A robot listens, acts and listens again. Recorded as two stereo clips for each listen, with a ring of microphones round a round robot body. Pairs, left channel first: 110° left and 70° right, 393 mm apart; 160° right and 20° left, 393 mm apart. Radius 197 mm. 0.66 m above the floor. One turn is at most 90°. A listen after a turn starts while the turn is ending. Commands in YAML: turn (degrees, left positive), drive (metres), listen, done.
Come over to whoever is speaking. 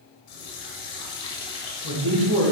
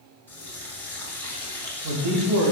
turn: -10
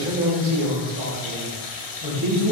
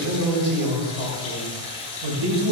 drive: 1.0
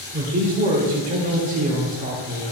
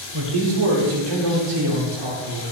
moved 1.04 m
drive: 1.0
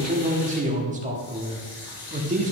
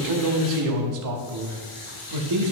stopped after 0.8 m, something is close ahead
done: "Arrived at the man speaking, straight ahead."